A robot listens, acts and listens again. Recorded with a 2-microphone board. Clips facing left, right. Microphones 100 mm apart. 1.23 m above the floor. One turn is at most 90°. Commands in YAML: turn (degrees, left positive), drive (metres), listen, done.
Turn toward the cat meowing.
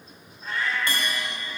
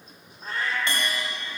turn: -40
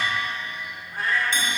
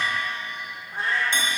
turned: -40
turn: -25
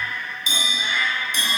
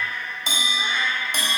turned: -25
turn: -30
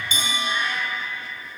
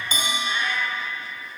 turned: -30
done: "Facing the cat meowing, 1 to 2 m away."